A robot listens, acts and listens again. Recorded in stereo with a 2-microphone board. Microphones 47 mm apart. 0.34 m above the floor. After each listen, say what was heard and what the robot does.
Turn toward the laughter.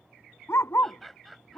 Turn 30° left.
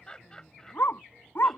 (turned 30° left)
So it is at 165° left. Turn 165° left.
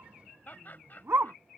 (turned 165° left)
The laughter is now 45° left. Turn 45° left.
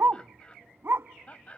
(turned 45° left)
The laughter is now 30° left. Turn 30° left.
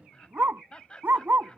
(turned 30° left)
The laughter is now 20° left. Turn 20° left.
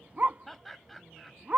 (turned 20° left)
Found it: laughter, straight ahead.